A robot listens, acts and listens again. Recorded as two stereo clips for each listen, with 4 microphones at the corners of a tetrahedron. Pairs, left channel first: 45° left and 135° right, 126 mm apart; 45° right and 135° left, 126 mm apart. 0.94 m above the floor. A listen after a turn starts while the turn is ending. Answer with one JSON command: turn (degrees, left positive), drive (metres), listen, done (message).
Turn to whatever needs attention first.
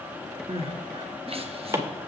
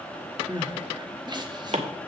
{"turn": -175}
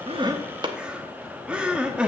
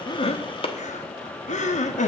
{"turn": -55}
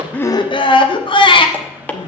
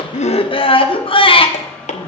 {"done": "Facing the crying."}